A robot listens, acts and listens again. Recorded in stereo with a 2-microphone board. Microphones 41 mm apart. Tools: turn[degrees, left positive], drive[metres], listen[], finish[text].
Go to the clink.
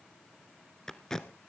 Action: listen[]
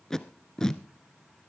Action: listen[]
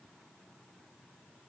Action: finish[I can't make out a clink to turn to.]